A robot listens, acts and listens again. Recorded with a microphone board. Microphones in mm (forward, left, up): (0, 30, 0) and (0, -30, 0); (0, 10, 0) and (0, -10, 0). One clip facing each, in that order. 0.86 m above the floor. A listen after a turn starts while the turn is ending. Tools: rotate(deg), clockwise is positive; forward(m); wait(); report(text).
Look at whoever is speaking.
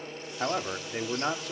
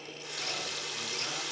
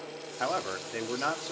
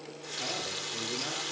rotate(-55)
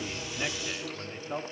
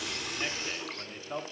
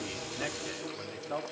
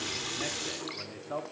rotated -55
report("Facing the man speaking, 2 to 4 m away.")